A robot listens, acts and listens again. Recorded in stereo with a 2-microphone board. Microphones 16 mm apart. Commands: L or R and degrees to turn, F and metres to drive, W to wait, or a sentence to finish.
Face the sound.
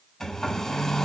L30
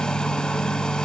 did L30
L120
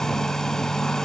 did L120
L35
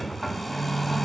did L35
Found it: a hair dryer, straight ahead.